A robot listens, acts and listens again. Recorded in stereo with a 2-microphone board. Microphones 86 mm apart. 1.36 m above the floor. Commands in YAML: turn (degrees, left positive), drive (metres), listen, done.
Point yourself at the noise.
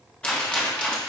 turn: 30
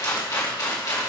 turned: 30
turn: 135
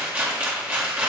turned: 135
turn: -20
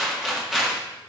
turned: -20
done: "Facing the rattle."